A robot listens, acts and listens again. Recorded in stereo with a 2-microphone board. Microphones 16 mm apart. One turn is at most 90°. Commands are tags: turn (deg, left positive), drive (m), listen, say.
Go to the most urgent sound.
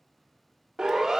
<turn deg="-60"/>
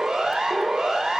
<turn deg="-60"/>
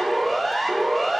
<turn deg="10"/>
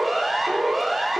<drive m="1.0"/>
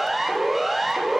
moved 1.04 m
<drive m="1.0"/>
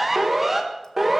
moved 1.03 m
<drive m="1.0"/>
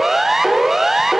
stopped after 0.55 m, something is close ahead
<turn deg="-15"/>
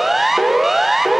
<say>I am next to the siren.</say>